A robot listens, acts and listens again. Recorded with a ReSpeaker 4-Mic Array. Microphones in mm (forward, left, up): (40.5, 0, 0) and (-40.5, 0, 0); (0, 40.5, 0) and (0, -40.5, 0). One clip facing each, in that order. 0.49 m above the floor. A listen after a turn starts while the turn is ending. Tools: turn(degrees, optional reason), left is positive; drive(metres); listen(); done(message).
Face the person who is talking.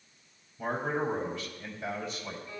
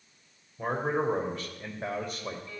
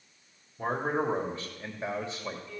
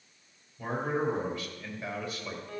turn(degrees=155, reason="The man speaking: 155° left.")
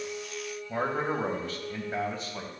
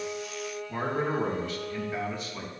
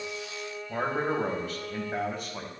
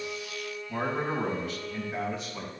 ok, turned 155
turn(degrees=50, reason="The man speaking is now 50° left.")
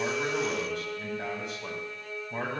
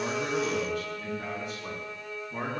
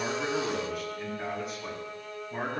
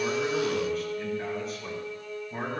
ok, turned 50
done("Facing the man speaking, 2 to 4 m away.")